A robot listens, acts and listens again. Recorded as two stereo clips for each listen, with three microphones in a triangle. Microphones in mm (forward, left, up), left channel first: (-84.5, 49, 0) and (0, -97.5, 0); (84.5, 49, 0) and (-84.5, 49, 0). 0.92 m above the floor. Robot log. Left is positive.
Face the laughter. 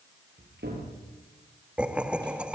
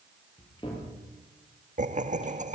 note: The laughter: 145° right.
cmd yaw -145
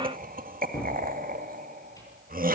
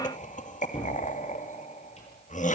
note: The laughter is now 35° right.
cmd yaw -35
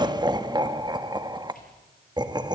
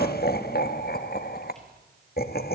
end: Facing the laughter, 1 to 2 m away.